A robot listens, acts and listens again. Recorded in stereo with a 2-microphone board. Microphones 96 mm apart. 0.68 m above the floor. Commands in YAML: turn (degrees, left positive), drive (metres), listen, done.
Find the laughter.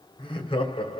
turn: 70
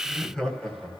done: "Facing the laughter, over 4 m away."